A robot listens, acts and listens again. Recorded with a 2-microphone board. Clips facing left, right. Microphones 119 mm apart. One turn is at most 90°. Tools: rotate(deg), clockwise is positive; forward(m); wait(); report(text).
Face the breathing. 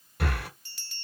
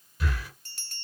rotate(-65)
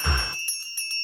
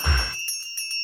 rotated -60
rotate(-30)
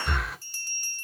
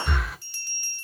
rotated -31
report("Facing the breathing, 1 to 2 m away.")